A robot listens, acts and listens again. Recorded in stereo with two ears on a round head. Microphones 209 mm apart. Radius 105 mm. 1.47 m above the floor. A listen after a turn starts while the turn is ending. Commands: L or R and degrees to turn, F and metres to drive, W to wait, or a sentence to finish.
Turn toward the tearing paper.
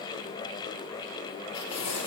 L90
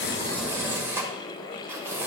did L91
R10
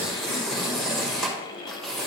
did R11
Facing the tearing paper, 1 to 2 m away.